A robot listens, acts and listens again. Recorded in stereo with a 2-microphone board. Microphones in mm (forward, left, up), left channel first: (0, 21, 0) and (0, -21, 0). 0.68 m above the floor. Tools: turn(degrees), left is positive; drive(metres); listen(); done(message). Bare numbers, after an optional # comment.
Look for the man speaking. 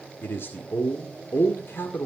# The man speaking: about 65° left or 115° left.
turn(65)
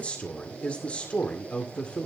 # So it is at 35° left.
turn(35)
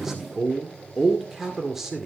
# The man speaking is now 10° right.
turn(-10)
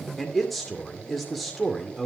done("Found it: a man speaking, straight ahead, 2 to 4 m away.")